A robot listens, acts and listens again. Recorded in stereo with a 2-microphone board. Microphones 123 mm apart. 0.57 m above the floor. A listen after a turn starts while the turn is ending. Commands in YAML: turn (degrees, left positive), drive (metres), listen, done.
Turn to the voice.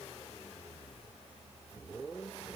listen: true
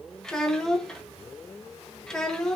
turn: 30
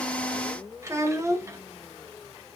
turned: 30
turn: -25
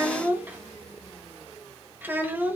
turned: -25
turn: -15
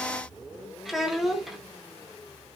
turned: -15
done: "Found it: a child speaking, straight ahead, under 1 m away."